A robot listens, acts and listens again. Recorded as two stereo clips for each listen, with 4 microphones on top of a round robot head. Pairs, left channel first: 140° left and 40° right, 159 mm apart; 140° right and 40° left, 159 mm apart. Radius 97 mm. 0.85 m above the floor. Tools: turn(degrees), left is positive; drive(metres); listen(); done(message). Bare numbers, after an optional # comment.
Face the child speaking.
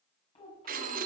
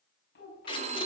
# The child speaking: 165° right.
turn(-165)
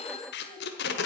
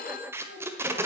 listen()
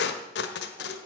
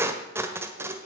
listen()
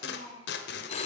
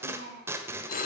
# The child speaking is now 15° left.
turn(15)
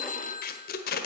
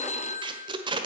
listen()
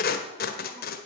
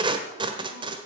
listen()
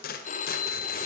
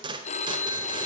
done("Facing where the child speaking came from. I can't hear it now.")